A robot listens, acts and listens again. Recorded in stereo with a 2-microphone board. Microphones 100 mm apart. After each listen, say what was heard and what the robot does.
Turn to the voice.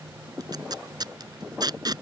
Keep listening.
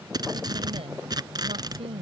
Turn 90° right.
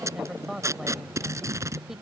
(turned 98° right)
Found it: a woman speaking, straight ahead.